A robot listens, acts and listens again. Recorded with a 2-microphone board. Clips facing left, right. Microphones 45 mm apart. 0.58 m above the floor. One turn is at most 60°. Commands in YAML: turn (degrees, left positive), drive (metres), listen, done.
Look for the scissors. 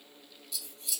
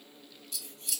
turn: -45
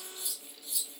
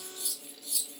turn: -60
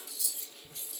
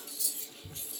turn: -45
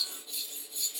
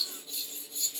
done: "Facing the scissors, 1 to 2 m away."